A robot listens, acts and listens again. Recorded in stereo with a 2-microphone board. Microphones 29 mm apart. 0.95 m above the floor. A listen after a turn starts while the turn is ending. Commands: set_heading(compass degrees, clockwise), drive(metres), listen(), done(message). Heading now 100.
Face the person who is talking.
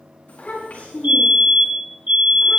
set_heading(55)
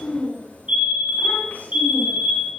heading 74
set_heading(334)
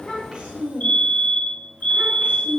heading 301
set_heading(341)
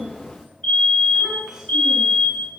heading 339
done("Facing the child speaking, over 4 m away.")